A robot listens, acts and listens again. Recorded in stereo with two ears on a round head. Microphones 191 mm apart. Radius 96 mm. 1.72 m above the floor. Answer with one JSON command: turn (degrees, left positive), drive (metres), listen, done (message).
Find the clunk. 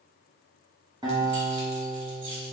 {"listen": true}
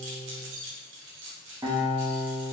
{"listen": true}
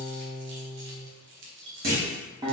{"turn": -45}
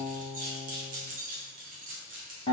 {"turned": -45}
{"listen": true}
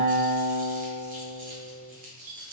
{"done": "I heard a clunk, but can't make it out now. It was about straight ahead or 90° right."}